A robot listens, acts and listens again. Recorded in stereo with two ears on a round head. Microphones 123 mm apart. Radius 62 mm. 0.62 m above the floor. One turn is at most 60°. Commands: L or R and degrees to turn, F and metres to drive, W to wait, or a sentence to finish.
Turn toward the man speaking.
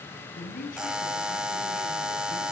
L60
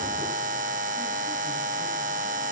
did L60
W
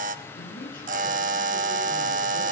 L60
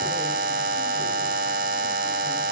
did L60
L10
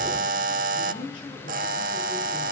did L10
L35
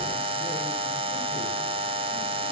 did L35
W
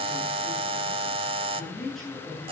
Found it: a man speaking, straight ahead, over 4 m away.